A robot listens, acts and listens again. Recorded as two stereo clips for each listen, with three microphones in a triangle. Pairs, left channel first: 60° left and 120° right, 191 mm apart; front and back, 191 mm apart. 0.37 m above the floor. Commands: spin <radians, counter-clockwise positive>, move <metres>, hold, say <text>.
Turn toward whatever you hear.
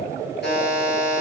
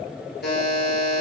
spin 0.52
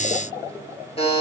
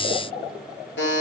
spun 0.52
say Found it: a buzzer, straight ahead.